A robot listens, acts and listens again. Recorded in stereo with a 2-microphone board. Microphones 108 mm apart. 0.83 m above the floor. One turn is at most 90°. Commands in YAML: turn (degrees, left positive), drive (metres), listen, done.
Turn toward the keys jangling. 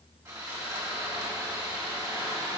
listen: true
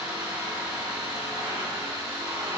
listen: true
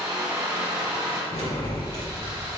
turn: 65
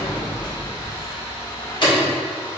turn: 50
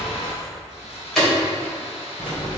done: "Facing the keys jangling."